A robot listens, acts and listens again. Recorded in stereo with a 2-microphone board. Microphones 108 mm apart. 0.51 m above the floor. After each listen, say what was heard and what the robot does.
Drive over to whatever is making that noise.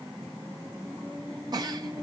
The giggle: about 40° right or 140° right. Turn 40° right.
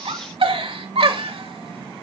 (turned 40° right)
So it is at 90° right. Turn 90° right.
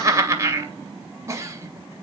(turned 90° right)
The giggle is now 35° right. Turn 35° right.
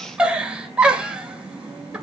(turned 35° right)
The giggle is now 10° right. Turn 10° right.
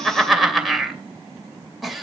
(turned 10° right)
Drive 1.0 m forward.
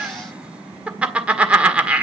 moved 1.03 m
The giggle is now 15° right. Turn 15° right.
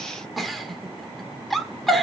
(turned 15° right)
Drive 1.0 m forward.
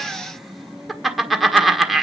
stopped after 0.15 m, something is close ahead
Arrived at the giggle, straight ahead.